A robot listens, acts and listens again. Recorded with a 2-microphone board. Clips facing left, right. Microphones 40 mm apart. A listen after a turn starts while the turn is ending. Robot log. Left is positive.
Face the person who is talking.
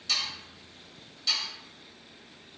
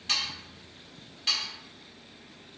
cmd idle
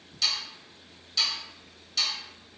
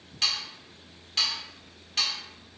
cmd idle
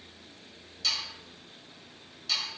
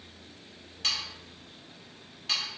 end: I can't make out anyone speaking to turn to.